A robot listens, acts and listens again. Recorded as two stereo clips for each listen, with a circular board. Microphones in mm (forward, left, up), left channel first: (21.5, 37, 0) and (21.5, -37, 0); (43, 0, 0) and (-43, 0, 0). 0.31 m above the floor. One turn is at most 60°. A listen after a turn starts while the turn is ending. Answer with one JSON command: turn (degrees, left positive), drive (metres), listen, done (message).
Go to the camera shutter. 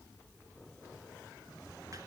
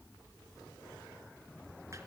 {"listen": true}
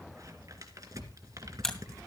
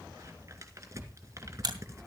{"turn": 60}
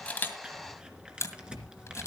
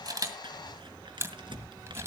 {"turn": 60}
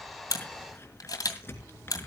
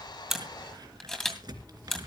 {"turn": 60}
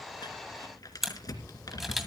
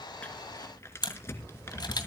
{"drive": 1.0}
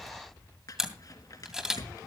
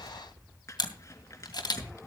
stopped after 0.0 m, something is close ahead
{"turn": -10}
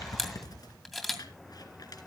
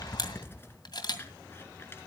{"done": "Something is in my way. I am facing the camera shutter but have not reached it."}